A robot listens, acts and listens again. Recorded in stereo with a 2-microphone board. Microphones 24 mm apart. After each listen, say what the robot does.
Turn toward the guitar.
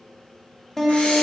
Turn 25° left.
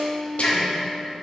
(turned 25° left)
Turn 130° left.
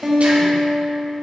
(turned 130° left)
Turn 30° right.
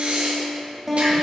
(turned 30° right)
Facing the guitar, 1 to 2 m away.